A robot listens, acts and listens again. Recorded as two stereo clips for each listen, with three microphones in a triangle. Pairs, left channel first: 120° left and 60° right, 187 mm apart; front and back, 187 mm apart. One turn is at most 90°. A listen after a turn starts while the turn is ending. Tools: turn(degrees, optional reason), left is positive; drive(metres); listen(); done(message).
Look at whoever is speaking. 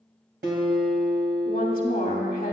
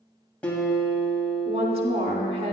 turn(degrees=90, reason="The woman speaking: 155° left.")
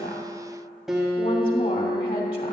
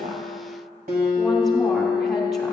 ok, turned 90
turn(degrees=65, reason="Nothing new. It was at 65° left.")
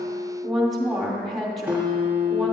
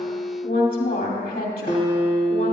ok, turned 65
turn(degrees=30, reason="The woman speaking is now 30° left.")
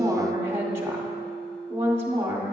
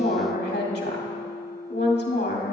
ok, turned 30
turn(degrees=15, reason="The woman speaking is now 15° left.")
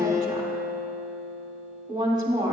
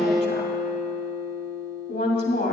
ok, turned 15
done("Found it: a woman speaking, straight ahead.")